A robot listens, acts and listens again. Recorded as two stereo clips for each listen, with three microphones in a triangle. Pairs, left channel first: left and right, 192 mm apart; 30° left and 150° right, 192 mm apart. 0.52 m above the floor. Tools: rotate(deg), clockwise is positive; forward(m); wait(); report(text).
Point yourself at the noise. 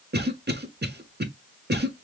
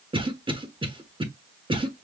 rotate(90)
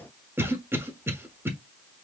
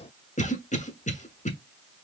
rotate(15)
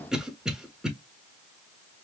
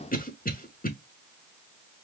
report("Found it: a cough, straight ahead.")